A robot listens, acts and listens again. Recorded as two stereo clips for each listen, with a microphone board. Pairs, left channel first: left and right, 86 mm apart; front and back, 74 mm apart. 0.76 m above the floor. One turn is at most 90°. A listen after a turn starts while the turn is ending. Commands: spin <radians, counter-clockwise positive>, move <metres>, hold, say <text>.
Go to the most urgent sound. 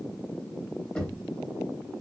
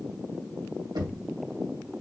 hold
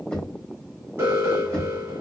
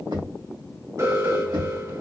spin -1.57
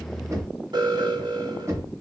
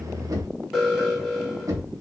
spin -1.57
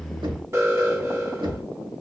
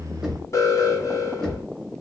spin -0.61
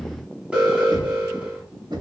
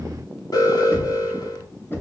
spin -0.26
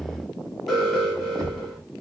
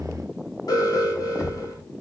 move 1.0
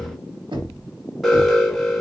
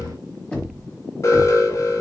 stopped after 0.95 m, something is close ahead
say I am next to the alarm.